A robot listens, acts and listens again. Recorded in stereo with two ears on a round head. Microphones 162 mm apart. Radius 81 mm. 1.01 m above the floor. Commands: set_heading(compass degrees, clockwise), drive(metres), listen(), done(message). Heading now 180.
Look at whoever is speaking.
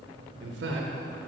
set_heading(250)
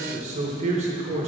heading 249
set_heading(289)
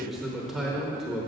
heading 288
done("Facing the man speaking.")